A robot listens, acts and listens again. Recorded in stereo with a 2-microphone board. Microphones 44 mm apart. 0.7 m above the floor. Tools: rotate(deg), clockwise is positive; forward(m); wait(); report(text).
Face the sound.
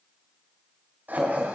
rotate(40)
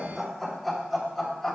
rotate(-10)
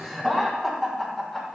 rotate(-15)
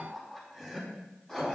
rotate(-10)
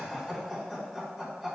report("Facing the laughter.")